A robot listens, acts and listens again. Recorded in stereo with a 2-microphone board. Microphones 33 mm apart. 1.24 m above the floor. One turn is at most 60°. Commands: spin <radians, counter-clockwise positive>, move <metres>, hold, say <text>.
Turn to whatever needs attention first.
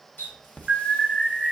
spin -0.44
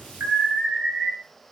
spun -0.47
spin -1.05
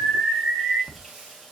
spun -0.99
spin -1.05
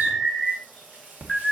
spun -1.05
spin -0.17
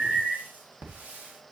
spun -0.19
say Found it: an alarm, straight ahead.